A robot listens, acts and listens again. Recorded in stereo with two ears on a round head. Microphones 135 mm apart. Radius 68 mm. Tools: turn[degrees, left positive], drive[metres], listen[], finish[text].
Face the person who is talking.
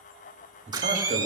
Thought: The man speaking: about 60° right or 120° right.
Action: turn[-60]
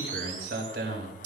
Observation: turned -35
Thought: So it is at 80° right.
Action: turn[-80]
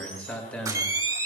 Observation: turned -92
Thought: The man speaking is now 10° left.
Action: turn[10]
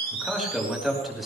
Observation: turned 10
Action: finish[Found it: a man speaking, straight ahead.]